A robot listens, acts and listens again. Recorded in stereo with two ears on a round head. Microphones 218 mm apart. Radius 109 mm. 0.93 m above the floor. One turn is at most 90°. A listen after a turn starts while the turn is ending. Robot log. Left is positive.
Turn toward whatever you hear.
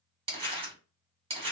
note: The crumpling: about 25° right or 155° right.
cmd yaw -25
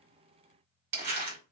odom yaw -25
note: So it is at 130° right.
cmd yaw -90
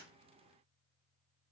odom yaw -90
note: Nothing new. It was at 40° right.
cmd yaw -40
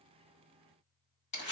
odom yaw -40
note: The crumpling is now 30° left.
cmd yaw +30
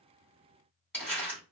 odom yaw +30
end: Facing the crumpling, 1 to 2 m away.